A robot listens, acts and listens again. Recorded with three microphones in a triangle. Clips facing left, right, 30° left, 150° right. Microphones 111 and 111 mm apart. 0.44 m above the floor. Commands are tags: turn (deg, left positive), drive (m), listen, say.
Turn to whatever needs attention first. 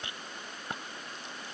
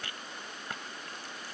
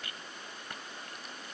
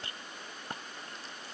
<listen/>
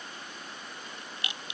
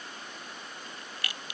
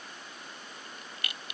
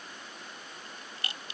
<listen/>
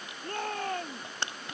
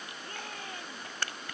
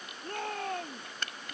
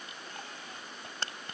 <turn deg="55"/>
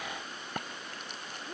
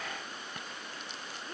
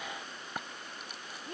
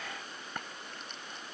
<listen/>
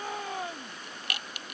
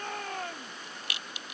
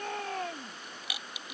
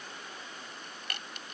<turn deg="10"/>
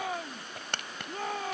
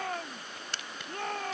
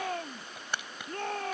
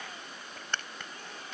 <say>Facing the shout.</say>